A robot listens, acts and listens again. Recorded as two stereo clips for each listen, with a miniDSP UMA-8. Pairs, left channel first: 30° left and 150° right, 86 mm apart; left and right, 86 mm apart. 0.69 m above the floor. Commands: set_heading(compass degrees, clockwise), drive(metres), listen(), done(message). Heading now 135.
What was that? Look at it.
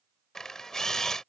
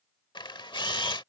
set_heading(20)
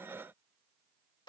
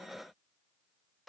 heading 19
listen()
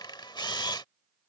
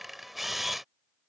done("Found it: a camera shutter, straight ahead.")